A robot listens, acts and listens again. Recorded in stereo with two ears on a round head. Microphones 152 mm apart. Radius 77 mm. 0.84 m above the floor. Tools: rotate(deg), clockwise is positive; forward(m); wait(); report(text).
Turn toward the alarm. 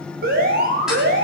rotate(60)
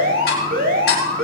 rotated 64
rotate(55)
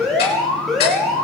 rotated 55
report("Found it: an alarm, straight ahead.")